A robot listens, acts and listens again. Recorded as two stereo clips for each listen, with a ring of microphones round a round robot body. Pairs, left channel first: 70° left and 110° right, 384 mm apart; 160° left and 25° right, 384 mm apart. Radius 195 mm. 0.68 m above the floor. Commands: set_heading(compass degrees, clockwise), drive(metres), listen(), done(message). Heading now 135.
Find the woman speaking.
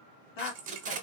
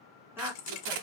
set_heading(70)
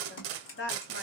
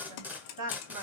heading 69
set_heading(59)
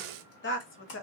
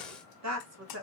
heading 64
set_heading(44)
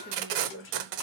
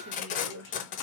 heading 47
set_heading(27)
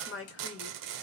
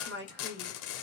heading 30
set_heading(355)
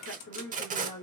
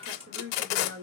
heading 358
set_heading(333)
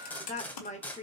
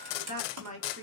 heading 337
done("Found it: a woman speaking, straight ahead, 1 to 2 m away.")